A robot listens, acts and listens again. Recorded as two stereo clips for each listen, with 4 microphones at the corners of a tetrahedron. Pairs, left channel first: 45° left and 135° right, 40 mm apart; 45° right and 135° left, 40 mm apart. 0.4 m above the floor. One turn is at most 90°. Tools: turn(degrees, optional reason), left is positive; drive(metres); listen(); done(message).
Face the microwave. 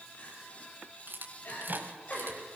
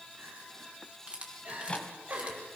turn(degrees=-90, reason="The microwave: 100° right.")
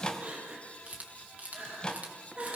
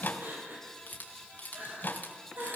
turn(degrees=-20, reason="The microwave is now 20° right.")
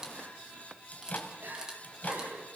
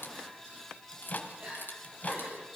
done("Found it: a microwave, straight ahead.")